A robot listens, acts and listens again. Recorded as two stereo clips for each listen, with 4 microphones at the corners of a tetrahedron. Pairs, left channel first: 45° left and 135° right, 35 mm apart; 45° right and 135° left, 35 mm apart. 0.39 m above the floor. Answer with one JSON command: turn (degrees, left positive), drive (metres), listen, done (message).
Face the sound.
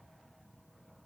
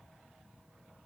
{"listen": true}
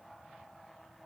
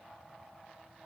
{"listen": true}
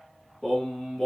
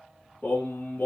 {"turn": -35}
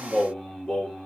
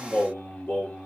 {"turn": -25}
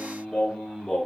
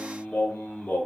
{"turn": -20}
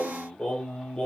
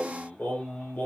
{"turn": -15}
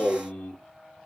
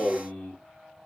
{"done": "Found it: singing, straight ahead."}